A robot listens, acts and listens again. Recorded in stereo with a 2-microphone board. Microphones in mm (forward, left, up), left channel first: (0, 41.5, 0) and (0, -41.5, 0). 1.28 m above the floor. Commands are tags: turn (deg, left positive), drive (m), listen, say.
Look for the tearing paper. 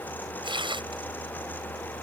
<turn deg="-90"/>
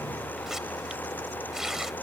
<say>Facing the tearing paper.</say>